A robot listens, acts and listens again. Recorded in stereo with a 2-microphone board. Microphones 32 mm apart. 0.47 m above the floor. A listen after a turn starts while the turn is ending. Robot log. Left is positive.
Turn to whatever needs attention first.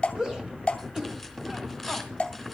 note: The shout: about 25° right or 155° right.
cmd yaw -25
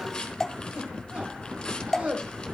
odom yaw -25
note: So it is at 130° right.
cmd yaw -130
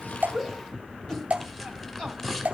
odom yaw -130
cmd idle
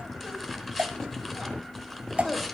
note: The shout is now 20° left.
cmd yaw +20
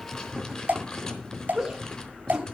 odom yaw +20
end: Facing the shout, 2 to 4 m away.